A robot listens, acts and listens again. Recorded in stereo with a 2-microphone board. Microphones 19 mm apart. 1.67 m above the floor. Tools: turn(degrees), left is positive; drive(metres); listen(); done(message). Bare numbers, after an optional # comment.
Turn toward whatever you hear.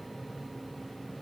listen()
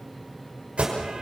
turn(-90)
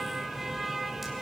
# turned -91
# So it is at 10° right.
turn(-10)
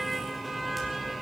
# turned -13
done("Found it: an alarm, straight ahead.")